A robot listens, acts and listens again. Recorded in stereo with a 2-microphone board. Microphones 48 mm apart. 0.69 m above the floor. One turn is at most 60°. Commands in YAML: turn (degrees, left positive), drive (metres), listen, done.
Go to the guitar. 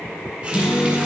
turn: 45
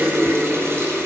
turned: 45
listen: true
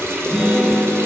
drive: 1.0
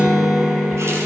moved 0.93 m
turn: -10
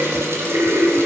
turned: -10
listen: true
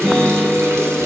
drive: 1.0
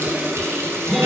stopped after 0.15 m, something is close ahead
done: "Arrived at the guitar, straight ahead."